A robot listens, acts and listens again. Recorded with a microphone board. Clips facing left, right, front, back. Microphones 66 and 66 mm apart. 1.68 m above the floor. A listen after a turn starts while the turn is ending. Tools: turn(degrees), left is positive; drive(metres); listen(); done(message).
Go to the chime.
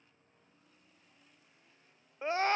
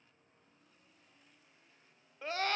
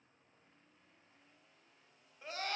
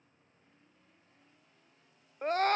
listen()
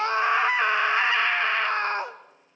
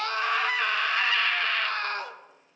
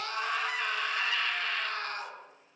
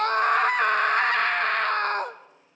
listen()
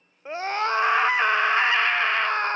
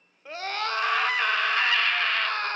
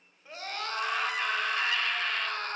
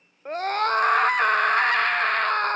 done("I can't make out a chime, only a scream.")